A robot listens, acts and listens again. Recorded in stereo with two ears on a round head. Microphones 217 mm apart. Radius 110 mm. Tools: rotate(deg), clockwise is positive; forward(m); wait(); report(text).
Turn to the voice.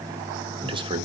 rotate(20)
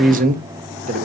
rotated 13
rotate(145)
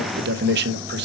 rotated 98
rotate(45)
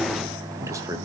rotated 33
rotate(15)
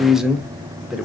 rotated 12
report("Found it: a man speaking, straight ahead, under 1 m away.")